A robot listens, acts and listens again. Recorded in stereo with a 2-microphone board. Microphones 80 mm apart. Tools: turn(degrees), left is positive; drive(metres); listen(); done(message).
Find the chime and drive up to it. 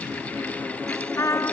listen()
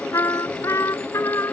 listen()
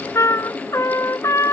done("I can't make out a chime, only a trumpet.")